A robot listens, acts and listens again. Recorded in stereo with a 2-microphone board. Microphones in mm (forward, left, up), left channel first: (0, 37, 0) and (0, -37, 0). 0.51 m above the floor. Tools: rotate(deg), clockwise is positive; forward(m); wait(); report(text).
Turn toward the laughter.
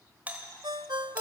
wait()
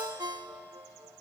wait()
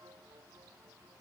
report("I can't make out laughter to turn to.")